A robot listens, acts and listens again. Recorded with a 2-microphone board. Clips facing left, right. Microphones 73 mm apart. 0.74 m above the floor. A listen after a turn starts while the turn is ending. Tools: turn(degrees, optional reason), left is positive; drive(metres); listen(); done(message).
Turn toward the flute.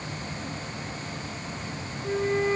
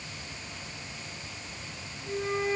turn(degrees=50, reason="The flute: about 50° left or 130° left.")
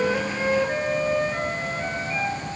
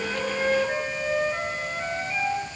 done("Facing the flute, 2 to 4 m away.")